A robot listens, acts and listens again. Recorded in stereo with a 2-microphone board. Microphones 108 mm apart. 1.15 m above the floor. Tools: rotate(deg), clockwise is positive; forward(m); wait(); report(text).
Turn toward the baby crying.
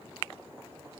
wait()
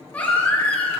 rotate(-30)
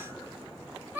rotate(15)
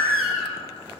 report("Facing the baby crying, over 4 m away.")